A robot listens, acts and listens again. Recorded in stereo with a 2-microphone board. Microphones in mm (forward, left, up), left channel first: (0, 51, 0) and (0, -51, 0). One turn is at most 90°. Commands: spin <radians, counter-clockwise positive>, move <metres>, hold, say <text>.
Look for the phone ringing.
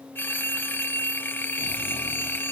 spin 0.35
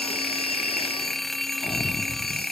say Found it: a phone ringing, straight ahead.